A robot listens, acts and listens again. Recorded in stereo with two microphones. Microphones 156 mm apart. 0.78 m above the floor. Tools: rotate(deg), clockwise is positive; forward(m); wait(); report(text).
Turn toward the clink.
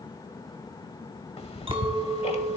rotate(35)
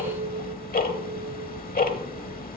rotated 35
rotate(105)
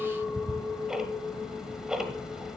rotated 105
report("Facing the clink.")